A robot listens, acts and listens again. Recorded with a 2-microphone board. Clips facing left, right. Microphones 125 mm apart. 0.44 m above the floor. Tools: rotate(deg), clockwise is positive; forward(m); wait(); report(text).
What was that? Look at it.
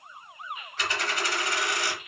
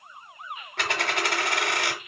rotate(65)
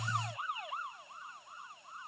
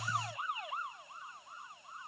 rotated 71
wait()
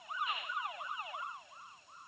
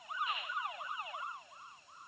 report("I heard a dropped coin, but can't make it out now. It was about 5° left or 45° right.")